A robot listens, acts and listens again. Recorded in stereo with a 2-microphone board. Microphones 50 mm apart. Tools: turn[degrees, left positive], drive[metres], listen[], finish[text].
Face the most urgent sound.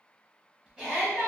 Thought: The shout: about 20° left or 160° left.
Action: turn[20]
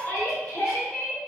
Thought: So it is at 140° left.
Action: turn[140]
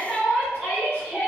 Action: finish[Found it: a shout, straight ahead, 1 to 2 m away.]